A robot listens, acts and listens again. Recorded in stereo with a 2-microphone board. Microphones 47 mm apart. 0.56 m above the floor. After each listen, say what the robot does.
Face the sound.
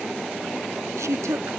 Turn 90° right.
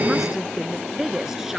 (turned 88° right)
Turn 10° right.
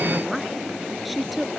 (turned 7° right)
Found it: a woman speaking, straight ahead.